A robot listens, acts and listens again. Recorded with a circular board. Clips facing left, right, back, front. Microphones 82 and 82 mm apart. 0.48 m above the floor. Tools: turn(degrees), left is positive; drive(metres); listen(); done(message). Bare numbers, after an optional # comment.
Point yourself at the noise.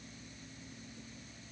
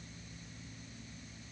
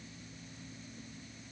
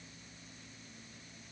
listen()
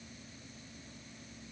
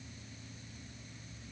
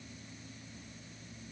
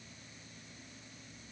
listen()
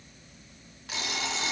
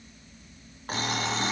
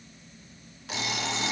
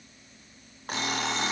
# The alarm clock: 45° right.
turn(-45)
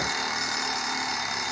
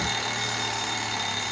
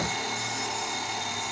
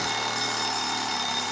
# The alarm clock is now 15° left.
turn(15)
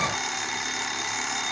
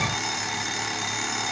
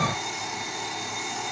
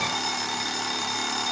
done("Facing the alarm clock, 2 to 4 m away.")